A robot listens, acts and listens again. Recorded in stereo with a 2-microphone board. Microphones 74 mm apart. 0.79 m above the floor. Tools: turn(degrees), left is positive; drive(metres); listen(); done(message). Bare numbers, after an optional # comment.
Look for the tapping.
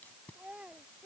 listen()
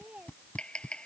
turn(30)
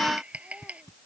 # So it is at 15° right.
turn(-15)
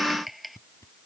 done("Found it: tapping, straight ahead.")